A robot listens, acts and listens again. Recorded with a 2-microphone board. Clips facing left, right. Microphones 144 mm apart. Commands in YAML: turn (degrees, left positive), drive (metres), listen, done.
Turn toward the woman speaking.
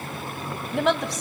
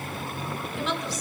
turn: 65
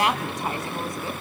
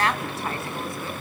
turn: 20
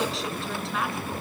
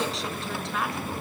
done: "Facing the woman speaking."